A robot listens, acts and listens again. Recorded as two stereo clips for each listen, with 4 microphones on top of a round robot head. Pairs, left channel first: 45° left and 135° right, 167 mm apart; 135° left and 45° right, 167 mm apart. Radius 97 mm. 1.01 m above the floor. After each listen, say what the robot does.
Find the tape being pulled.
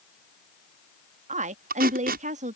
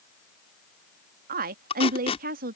Turn 170° right.
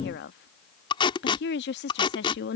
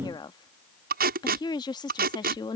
Turn 15° right.
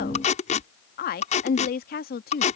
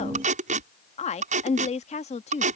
Found it: tape being pulled, straight ahead.